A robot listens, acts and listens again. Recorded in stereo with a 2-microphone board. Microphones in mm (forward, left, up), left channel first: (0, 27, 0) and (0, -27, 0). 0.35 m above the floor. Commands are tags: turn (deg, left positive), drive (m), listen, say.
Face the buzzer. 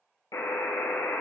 <turn deg="90"/>
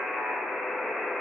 <say>Facing the buzzer, 1 to 2 m away.</say>